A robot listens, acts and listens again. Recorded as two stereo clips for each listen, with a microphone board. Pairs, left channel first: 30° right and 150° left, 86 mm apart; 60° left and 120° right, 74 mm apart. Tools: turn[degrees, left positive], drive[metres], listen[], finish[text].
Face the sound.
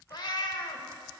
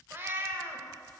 Thought: The cat meowing: 60° right.
Action: turn[-60]
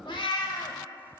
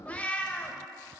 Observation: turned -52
Thought: The cat meowing is now 10° right.
Action: turn[-10]
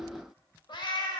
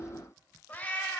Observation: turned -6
Action: finish[Facing the cat meowing, under 1 m away.]